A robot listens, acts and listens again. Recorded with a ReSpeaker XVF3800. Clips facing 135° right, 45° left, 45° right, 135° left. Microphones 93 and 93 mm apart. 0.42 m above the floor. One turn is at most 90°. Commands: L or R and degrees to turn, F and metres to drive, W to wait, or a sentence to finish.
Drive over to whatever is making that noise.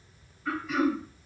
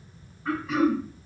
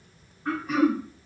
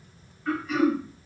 F1.0
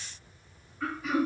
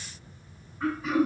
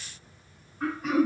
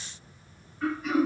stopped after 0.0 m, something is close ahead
R15
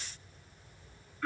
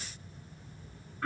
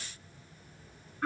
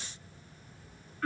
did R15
Blocked. The throat clearing is further on, straight ahead.